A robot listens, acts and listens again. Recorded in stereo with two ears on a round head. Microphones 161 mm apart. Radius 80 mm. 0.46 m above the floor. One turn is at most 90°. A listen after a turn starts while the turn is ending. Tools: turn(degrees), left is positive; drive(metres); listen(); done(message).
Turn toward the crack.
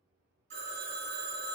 listen()
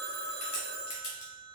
turn(degrees=55)
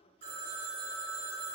listen()
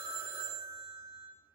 done("I heard a crack, but can't make it out now. It was about straight ahead or 70° left.")